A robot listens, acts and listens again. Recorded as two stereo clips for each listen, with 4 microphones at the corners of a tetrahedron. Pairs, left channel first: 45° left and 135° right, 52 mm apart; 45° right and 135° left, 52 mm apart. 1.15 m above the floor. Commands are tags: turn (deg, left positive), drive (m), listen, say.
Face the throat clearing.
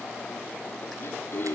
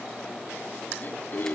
<say>Facing the throat clearing.</say>